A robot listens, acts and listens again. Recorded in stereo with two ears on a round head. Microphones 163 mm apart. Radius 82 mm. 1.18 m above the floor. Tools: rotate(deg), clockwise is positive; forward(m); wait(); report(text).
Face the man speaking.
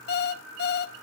wait()
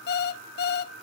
wait()
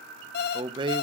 rotate(25)
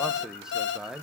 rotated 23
report("Facing the man speaking.")